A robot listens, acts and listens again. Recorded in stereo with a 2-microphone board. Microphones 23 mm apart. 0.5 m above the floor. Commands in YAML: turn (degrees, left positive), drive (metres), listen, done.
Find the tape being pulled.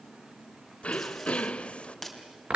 turn: 30
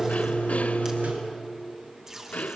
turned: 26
turn: -25
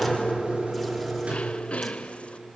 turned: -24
listen: true
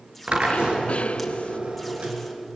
listen: true
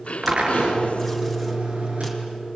done: "I heard tape being pulled from this way, but can't make it out now."